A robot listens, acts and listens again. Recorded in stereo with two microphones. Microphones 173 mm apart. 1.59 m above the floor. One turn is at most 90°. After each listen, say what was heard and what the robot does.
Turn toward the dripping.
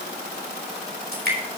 The dripping: about 65° right or 115° right. Turn 65° right.
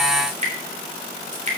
So it is at 45° right. Turn 45° right.
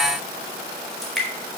Found it: dripping, straight ahead.